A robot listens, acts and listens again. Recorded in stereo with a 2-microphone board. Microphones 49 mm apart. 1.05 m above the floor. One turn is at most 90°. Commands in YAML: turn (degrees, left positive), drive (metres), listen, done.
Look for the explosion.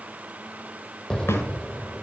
turn: 15
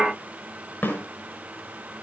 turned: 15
listen: true
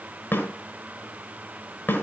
done: "I heard an explosion, but can't make it out now. It was about straight ahead or 150° left."